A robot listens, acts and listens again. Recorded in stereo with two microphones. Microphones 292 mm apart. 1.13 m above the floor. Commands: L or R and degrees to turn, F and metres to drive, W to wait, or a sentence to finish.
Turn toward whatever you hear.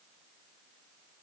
W
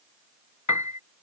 L70
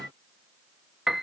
Found it: a piano, straight ahead.